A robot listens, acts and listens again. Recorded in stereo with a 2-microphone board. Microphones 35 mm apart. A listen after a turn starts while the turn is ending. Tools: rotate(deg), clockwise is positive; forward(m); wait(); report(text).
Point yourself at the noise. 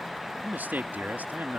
rotate(60)
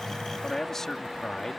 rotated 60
rotate(-15)
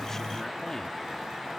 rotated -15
wait()
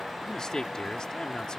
rotate(-20)
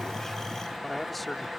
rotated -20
report("Facing the man speaking.")